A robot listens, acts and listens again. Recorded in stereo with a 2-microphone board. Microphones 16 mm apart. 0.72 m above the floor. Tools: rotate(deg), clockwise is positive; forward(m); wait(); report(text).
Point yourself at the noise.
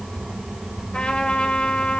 rotate(-90)
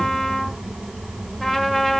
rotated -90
rotate(-15)
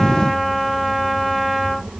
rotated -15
report("Found it: a trumpet, straight ahead, 1 to 2 m away.")